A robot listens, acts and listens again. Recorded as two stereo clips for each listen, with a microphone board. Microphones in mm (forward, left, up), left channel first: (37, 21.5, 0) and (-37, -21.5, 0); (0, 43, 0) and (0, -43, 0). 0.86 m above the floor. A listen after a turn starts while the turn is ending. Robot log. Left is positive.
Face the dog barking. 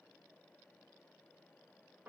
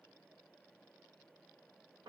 cmd idle
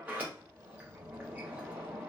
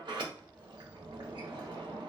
cmd idle
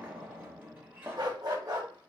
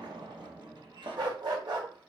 note: The dog barking: 110° right.
cmd yaw -110
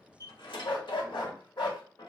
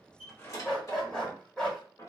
note: The dog barking is now 10° left.
cmd yaw +10
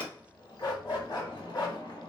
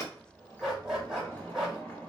end: Facing the dog barking, 1 to 2 m away.